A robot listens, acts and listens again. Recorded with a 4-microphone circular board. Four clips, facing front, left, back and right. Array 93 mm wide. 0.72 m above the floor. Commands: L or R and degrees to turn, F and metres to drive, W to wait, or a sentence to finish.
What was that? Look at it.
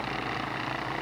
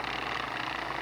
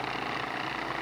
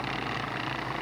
W
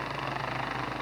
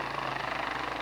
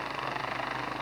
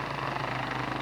W
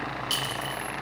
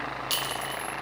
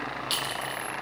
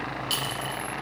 L120
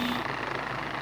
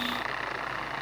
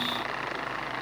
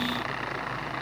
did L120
W
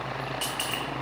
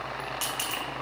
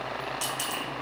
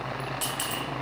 L10
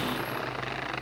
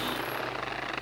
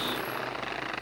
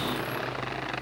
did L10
W
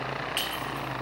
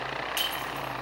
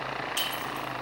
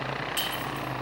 Found it: a clink, straight ahead, 1 to 2 m away.